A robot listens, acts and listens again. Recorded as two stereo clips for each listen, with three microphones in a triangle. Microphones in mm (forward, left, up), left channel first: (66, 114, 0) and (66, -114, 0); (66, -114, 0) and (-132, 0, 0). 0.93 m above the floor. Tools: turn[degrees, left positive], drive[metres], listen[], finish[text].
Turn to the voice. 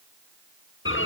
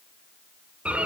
Action: listen[]
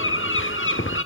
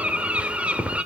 Action: listen[]
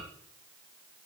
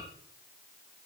Action: finish[I can't make out anyone speaking to turn to.]